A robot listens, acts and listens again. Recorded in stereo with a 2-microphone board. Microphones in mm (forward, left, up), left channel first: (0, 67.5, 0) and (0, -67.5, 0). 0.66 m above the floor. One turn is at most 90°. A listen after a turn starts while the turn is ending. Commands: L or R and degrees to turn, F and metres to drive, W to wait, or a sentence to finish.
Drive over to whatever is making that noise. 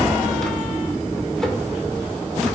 W
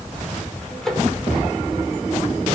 L30
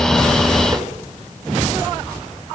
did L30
W
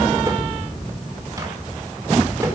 W
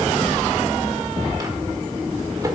I heard a microwave, but can't make it out now. It was about 25° right or 145° left. I did not reach it.